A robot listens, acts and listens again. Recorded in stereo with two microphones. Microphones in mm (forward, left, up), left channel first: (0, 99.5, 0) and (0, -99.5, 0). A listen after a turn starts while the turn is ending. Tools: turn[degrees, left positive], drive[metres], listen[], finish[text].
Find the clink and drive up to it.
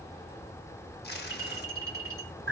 Thought: The clink: about 15° right or 165° right.
Action: turn[-15]
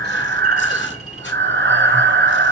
Action: listen[]
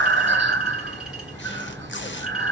Action: listen[]
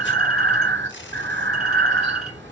Action: finish[I heard a clink, but can't make it out now. It was about straight ahead or 150° right. I did not reach it.]